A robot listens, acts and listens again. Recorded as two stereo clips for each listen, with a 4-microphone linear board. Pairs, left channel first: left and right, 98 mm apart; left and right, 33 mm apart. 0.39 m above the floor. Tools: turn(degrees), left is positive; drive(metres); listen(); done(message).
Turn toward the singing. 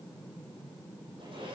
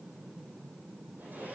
listen()
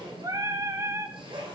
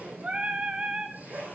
turn(degrees=-30)
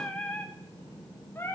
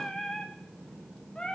turn(degrees=25)
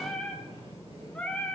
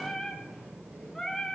turn(degrees=15)
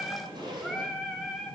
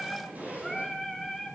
done("Found it: singing, straight ahead, 2 to 4 m away.")